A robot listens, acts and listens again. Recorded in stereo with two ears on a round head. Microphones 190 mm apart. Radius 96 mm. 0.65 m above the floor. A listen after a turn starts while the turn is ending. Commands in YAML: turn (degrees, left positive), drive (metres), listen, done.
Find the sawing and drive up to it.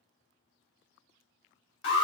listen: true
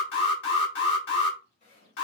turn: 40
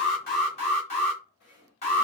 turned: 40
turn: 95
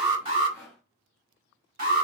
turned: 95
turn: 10
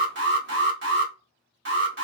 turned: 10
listen: true
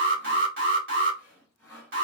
drive: 1.0
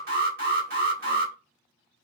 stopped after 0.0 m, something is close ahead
listen: true
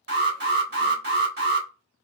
listen: true
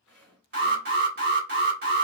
done: "Blocked. The sawing is further on, straight ahead."